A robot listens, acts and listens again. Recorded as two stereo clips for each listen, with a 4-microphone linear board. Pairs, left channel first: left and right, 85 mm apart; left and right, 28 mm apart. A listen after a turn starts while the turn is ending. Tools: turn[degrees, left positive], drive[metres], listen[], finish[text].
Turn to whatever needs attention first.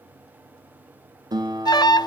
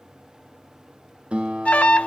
Thought: The alarm: about 55° left or 125° left.
Action: turn[55]
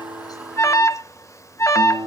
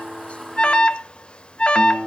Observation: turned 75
Thought: So it is at 40° left.
Action: turn[40]
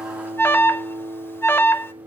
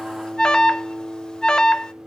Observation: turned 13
Thought: The alarm is now 30° left.
Action: turn[30]
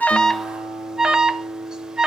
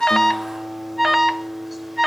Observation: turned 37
Thought: The alarm is now 10° right.
Action: turn[-10]
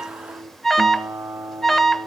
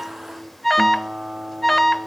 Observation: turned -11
Action: finish[Found it: an alarm, straight ahead.]